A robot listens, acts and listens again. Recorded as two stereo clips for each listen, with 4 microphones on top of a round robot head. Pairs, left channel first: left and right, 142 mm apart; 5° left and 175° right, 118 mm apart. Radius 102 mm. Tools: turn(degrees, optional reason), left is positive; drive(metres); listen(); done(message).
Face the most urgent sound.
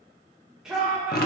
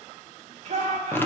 turn(degrees=-175, reason="The shout: 175° right.")
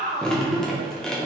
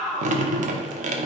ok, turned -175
turn(degrees=-80, reason="The shout is now 80° right.")
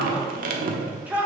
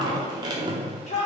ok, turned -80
turn(degrees=-10, reason="The shout is now 10° right.")
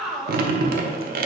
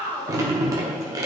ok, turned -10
done("Facing the shout.")